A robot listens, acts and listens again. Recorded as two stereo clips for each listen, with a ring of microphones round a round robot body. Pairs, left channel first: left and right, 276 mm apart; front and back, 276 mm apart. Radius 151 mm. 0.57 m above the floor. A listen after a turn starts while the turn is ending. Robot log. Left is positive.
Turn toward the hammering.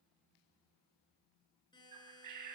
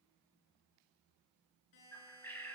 cmd idle
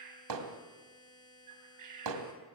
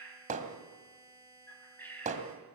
note: The hammering: 115° right.
cmd yaw -115
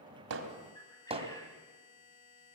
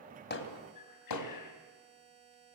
note: The hammering is now 20° right.
cmd yaw -20
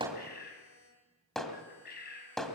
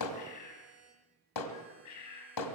end: Facing the hammering, 2 to 4 m away.